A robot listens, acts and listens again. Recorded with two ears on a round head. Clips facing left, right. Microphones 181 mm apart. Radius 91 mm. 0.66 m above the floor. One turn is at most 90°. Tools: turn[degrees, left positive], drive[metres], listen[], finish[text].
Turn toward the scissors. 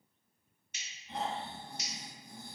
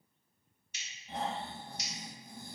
Thought: The scissors: about 45° left or 135° left.
Action: turn[45]
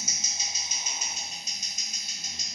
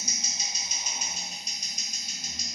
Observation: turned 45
Action: finish[Facing the scissors, under 1 m away.]